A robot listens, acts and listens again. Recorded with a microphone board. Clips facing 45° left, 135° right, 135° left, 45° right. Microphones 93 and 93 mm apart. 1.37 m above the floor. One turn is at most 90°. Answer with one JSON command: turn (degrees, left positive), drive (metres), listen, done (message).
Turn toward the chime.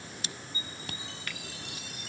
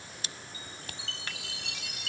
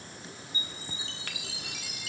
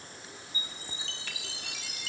{"turn": -90}
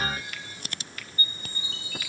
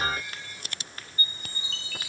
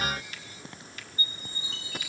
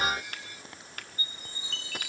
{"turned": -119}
{"turn": -25}
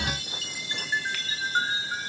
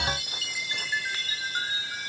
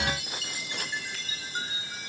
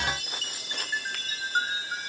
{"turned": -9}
{"turn": -15}
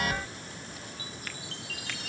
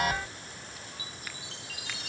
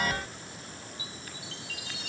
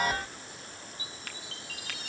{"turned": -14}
{"done": "Facing the chime."}